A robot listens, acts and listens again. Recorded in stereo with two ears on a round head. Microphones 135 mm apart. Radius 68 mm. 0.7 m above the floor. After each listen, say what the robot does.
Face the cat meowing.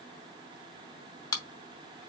Keep listening.
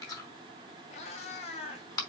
Turn 40° left.
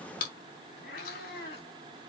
Turn 110° left.
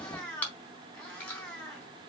Facing the cat meowing.